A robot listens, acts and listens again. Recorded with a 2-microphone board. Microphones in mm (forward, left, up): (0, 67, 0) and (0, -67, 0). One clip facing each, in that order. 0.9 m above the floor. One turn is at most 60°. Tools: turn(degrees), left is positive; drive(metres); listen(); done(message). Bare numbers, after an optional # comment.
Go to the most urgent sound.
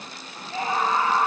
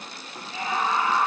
# The scream: about 35° left or 145° left.
turn(35)
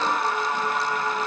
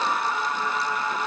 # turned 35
# So it is at 110° left.
turn(60)
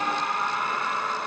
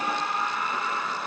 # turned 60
# The scream is now 65° left.
turn(60)
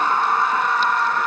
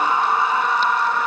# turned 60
# The scream is now 10° right.
turn(-10)
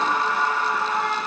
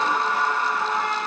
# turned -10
drive(1.0)
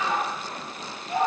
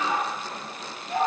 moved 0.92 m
drive(1.0)
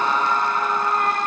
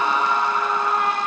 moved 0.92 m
drive(1.0)
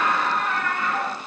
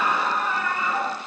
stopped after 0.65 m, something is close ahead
done("I am next to the scream.")